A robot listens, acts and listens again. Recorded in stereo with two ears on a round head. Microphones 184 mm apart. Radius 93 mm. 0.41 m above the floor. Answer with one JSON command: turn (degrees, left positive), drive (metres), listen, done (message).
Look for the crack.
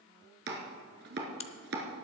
{"turn": 30}
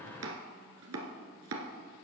{"listen": true}
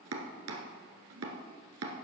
{"done": "I heard a crack, but can't make it out now. It was about straight ahead or 120° left."}